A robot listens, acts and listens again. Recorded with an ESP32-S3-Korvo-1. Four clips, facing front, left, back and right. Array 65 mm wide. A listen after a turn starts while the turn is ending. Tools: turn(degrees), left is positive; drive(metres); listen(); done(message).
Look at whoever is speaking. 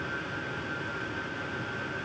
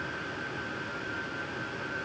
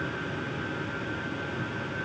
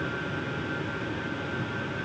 listen()
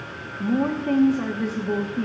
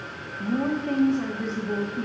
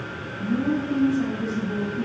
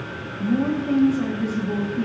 done("Facing the woman speaking.")